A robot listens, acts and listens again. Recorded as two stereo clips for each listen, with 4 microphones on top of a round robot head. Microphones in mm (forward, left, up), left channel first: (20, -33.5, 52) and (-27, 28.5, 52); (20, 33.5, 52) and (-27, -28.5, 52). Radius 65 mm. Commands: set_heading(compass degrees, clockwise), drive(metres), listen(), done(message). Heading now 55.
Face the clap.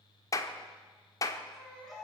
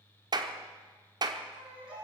set_heading(155)
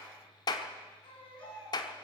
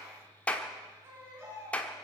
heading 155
set_heading(175)
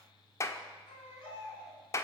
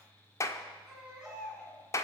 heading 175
done("Found it: a clap, straight ahead, 1 to 2 m away.")